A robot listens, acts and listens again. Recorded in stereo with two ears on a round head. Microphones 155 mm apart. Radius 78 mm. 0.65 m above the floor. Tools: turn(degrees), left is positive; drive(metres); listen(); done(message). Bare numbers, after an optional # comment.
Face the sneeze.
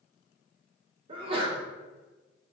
# The sneeze: about 30° right or 150° right.
turn(-30)
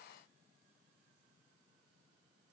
listen()
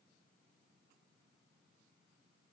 done("I heard a sneeze, but can't make it out now. It was about straight ahead or 120° right.")